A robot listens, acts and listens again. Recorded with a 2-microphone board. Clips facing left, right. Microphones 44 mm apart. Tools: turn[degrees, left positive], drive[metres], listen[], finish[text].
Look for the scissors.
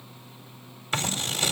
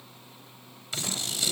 Thought: The scissors: about 40° left or 140° left.
Action: turn[40]
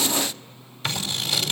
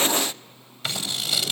Action: finish[Found it: scissors, straight ahead.]